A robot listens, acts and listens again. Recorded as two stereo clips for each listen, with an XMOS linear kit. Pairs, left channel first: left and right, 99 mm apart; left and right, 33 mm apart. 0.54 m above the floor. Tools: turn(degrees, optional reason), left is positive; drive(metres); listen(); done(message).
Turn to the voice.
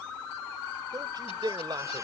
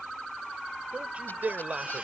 turn(degrees=-50, reason="The man speaking: about 50° right or 130° right.")
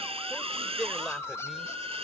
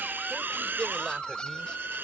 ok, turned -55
listen()
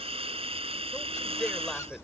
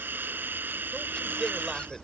listen()
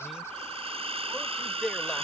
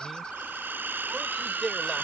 done("Facing the man speaking.")